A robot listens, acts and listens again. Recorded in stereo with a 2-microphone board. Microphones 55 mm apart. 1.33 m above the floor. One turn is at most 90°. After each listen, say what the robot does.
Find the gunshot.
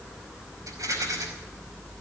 Keep listening.
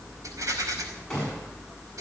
Turn 30° left.
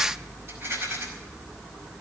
Keep listening.
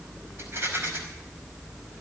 I heard a gunshot, but can't make it out now. It was about 20° right or 140° left.